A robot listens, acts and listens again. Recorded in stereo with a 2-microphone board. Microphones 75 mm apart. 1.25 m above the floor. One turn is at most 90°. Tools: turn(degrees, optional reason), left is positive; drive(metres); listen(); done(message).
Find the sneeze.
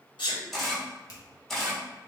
turn(degrees=90)
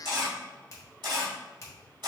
done("I heard a sneeze from this way, but can't make it out now.")